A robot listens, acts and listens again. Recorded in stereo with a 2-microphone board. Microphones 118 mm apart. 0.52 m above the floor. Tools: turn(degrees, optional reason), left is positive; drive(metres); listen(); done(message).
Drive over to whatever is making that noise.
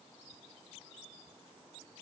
listen()
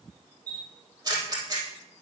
turn(degrees=-35, reason="The camera shutter: about 35° right or 145° right.")
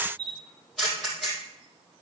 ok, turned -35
drive(metres=1.0)
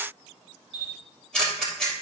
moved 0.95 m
drive(metres=1.0)
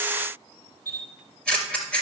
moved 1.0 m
turn(degrees=10, reason="The camera shutter is now 10° left.")
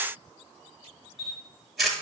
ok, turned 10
drive(metres=1.0)
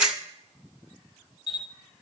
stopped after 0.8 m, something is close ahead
done("I am next to the camera shutter.")